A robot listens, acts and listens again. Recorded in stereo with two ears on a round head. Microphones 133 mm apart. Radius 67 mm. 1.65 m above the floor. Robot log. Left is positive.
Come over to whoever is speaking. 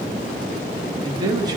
note: The man speaking: about 30° right or 150° right.
cmd yaw -30
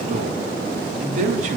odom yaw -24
note: So it is at 125° right.
cmd yaw -125
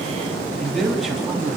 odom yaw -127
cmd fwd 1.0
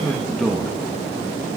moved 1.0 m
cmd fwd 1.0
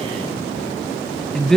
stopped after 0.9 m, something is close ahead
end: Arrived at the man speaking, straight ahead.